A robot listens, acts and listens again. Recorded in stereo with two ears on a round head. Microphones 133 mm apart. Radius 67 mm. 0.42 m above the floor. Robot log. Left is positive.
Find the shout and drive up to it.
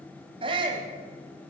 note: The shout: about 35° right or 145° right.
cmd yaw -35
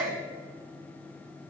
note: So it is at 105° right.
cmd yaw -105
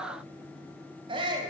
note: The shout is now 40° right.
cmd yaw -40
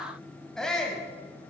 cmd fwd 1.0
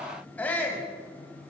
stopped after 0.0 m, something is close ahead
note: The shout is now 10° left.
cmd yaw +10
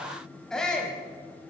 end: Something is in my way. I am facing the shout but have not reached it.